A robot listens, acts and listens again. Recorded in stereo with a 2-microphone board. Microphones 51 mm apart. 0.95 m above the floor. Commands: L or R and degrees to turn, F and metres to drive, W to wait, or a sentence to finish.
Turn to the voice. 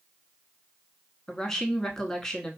L30
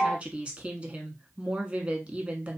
R25
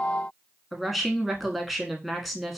Facing the woman speaking.